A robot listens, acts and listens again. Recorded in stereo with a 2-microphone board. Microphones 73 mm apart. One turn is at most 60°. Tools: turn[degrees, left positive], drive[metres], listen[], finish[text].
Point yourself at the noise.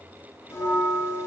Thought: The bell: about 35° left or 145° left.
Action: turn[35]
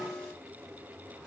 Thought: So it is at 15° left.
Action: turn[15]
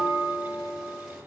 Action: finish[Found it: a bell, straight ahead.]